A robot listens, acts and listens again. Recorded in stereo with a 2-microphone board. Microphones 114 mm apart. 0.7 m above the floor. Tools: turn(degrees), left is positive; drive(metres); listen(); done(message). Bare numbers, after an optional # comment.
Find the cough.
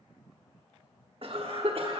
# The cough: about 55° right or 125° right.
turn(-55)
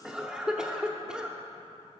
done("Facing the cough.")